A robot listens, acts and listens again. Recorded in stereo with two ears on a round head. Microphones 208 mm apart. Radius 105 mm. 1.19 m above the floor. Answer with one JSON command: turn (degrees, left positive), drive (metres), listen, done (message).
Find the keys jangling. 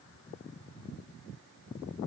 {"listen": true}
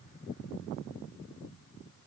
{"listen": true}
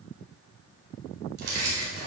{"turn": -50}
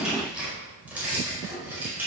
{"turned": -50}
{"turn": -10}
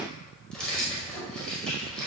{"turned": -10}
{"done": "Found it: keys jangling, straight ahead, over 4 m away."}